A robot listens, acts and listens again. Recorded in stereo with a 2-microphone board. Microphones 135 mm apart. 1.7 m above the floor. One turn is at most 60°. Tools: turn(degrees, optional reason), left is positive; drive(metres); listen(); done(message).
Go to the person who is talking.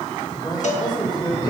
turn(degrees=35, reason="The man speaking: about 35° left or 145° left.")
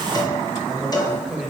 drive(metres=1.0)
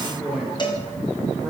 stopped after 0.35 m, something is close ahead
done("Blocked. The man speaking is further on, straight ahead.")